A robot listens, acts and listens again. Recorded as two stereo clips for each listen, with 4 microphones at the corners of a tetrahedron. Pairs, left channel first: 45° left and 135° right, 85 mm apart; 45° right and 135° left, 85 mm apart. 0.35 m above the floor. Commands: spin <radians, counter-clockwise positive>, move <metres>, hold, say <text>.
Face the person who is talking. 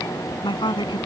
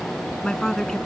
spin 0.70
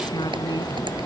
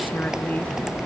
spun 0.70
hold
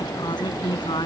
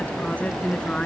spin 0.52
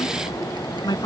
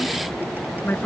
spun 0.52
spin 0.35
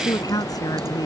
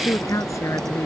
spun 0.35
spin 0.17
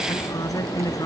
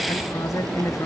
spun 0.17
say Found it: a woman speaking, straight ahead.